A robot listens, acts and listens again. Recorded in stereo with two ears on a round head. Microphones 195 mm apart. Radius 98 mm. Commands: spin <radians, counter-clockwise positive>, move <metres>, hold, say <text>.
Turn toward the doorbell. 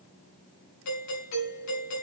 spin 1.57
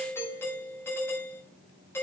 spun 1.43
spin 0.17
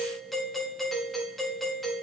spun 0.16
say Facing the doorbell, over 4 m away.